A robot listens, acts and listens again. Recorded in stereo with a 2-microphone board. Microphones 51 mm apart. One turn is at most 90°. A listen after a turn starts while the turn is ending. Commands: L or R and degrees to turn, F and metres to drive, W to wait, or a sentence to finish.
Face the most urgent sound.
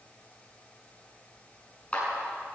W
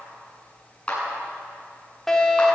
L30
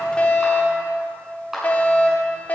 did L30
L90
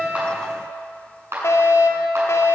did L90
L90
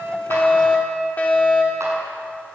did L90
L30
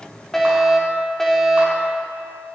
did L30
Found it: a fire alarm, straight ahead, 2 to 4 m away.